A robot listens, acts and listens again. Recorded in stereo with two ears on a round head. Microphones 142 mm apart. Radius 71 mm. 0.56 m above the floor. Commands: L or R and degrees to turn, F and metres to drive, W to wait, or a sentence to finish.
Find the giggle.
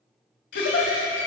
L65
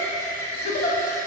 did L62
L50
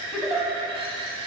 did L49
Facing the giggle, under 1 m away.